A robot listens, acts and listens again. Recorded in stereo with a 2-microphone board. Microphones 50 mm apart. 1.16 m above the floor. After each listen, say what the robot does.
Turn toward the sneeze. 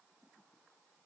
Keep listening.
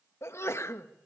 Turn 60° left.
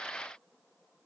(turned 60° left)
Keep listening.
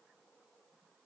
I heard a sneeze, but can't make it out now. It was about straight ahead or 60° left.